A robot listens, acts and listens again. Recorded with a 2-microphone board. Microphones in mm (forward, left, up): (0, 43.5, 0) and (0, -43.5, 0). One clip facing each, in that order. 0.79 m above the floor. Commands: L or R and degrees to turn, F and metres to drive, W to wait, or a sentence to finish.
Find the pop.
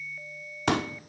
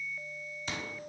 L70
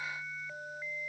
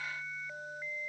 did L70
W
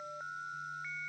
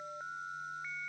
I heard a pop, but can't make it out now. It was about straight ahead or 40° left.